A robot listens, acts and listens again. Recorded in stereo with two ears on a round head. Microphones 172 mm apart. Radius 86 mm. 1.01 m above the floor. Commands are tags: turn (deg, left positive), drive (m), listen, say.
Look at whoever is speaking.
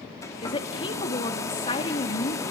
<turn deg="25"/>
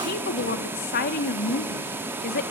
<turn deg="125"/>
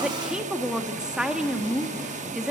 <say>Found it: a woman speaking, straight ahead, 2 to 4 m away.</say>